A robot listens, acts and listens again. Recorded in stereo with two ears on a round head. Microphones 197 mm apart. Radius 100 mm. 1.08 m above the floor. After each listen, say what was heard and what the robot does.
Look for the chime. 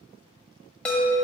Turn 30° left.
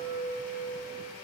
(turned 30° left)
So it is at 25° right. Turn 25° right.
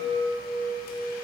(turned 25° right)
Facing the chime, 1 to 2 m away.